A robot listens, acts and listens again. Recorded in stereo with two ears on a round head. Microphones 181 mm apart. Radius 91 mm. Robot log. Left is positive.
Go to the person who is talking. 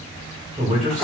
note: The man speaking: about 30° right or 150° right.
cmd yaw -30
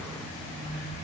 cmd idle
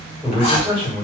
note: So it is at 10° right.
cmd yaw -10
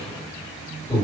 cmd fwd 1.0
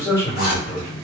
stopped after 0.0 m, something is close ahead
note: The man speaking is now 15° left.
cmd yaw +15
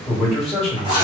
end: Something is in my way. I am facing the man speaking but have not reached it.